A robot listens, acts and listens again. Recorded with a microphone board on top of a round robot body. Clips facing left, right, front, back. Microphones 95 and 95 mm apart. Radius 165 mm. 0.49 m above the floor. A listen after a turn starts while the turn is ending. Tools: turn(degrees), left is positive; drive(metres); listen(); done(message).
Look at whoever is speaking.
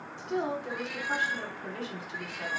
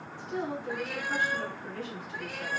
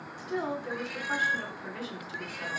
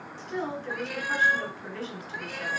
turn(degrees=80)
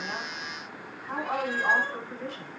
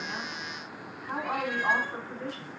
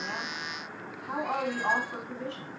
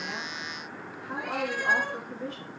done("Facing the woman speaking.")